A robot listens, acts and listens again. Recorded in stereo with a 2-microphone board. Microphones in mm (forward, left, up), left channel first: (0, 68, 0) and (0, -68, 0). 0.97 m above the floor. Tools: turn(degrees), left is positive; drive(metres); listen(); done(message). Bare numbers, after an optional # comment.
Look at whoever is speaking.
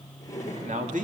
# The man speaking: about 70° right or 110° right.
turn(-70)
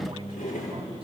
# So it is at 35° right.
turn(-35)
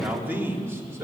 # The man speaking is now 20° right.
turn(-20)
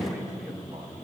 done("Found it: a man speaking, straight ahead, 2 to 4 m away.")